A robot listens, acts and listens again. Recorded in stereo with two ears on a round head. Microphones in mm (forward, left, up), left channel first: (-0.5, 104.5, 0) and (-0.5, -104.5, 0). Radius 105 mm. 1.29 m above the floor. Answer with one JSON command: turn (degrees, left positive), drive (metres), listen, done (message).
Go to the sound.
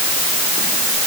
{"listen": true}
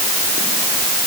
{"listen": true}
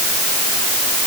{"done": "I can't make out anything."}